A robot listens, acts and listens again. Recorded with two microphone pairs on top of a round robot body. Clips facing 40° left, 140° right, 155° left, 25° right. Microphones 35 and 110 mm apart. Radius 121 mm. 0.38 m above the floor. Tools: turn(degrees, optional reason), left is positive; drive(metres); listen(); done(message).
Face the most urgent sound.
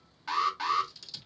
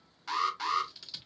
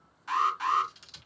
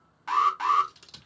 turn(degrees=-30, reason="The alarm: 30° right.")
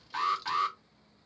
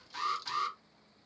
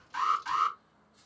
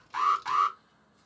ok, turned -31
done("Facing the alarm.")